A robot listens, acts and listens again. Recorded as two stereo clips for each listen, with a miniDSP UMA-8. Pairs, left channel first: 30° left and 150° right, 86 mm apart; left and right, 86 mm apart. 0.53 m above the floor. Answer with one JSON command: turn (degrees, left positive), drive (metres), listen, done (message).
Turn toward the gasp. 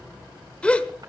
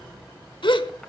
{"turn": 105}
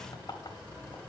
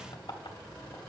{"done": "I heard a gasp from this way, but can't make it out now."}